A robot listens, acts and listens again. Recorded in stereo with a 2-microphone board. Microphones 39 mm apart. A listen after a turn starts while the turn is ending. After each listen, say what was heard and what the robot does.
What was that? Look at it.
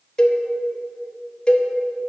The cowbell: about 20° left or 160° left. Turn 20° left.
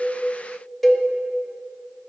Facing the cowbell, under 1 m away.